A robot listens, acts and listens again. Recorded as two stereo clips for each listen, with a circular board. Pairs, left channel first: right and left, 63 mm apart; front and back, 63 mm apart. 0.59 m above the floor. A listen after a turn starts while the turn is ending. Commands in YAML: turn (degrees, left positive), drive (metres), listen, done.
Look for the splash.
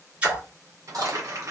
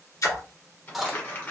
turn: 20
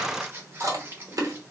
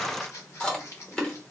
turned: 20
done: "Facing where the splash came from. I can't hear it now."